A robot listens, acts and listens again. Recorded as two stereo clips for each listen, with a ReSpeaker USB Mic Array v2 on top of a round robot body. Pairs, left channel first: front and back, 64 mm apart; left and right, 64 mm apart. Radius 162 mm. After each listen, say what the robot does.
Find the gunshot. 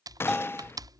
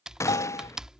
Turn 50° left.
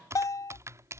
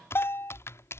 I heard a gunshot from this way, but can't make it out now.